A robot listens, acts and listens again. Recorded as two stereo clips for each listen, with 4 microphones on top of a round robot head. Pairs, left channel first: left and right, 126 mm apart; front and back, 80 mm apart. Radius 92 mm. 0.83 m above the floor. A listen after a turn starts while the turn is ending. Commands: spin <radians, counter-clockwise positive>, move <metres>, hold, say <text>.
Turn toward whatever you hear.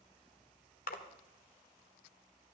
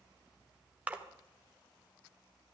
spin 1.83
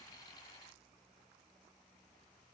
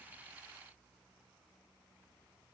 say I heard a splash from this way, but can't make it out now.